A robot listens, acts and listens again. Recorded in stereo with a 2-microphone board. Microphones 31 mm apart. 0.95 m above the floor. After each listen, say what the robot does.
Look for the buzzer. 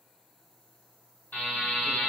Turn 65° left.
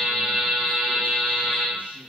Found it: a buzzer, straight ahead.